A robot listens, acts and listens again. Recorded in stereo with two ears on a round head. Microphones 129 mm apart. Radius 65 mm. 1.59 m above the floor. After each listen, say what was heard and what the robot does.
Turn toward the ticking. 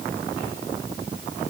Keep listening.
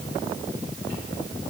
Keep listening.
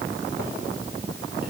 I can't make out ticking.